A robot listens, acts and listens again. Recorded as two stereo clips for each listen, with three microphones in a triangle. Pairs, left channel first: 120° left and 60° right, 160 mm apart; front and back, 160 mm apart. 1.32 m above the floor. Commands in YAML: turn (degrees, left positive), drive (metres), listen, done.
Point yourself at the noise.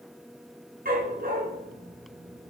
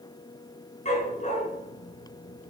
turn: -40
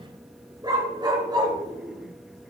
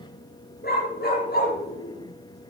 done: "Found it: a dog barking, straight ahead."